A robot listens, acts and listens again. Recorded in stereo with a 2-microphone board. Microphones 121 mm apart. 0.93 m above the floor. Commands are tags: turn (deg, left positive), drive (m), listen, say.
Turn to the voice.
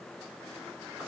<listen/>
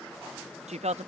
<turn deg="-75"/>
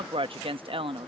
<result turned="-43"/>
<turn deg="-55"/>
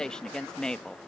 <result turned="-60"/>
<say>Found it: a woman speaking, straight ahead.</say>